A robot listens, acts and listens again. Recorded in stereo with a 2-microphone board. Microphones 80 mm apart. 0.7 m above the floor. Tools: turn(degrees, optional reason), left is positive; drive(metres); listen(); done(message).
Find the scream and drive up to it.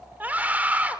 turn(degrees=-20, reason="The scream: about 20° right or 160° right.")
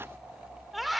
drive(metres=1.0)
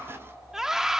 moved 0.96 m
drive(metres=1.0)
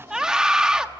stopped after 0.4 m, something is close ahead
turn(degrees=-10, reason="The scream is now 10° right.")
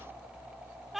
done("I am next to the scream.")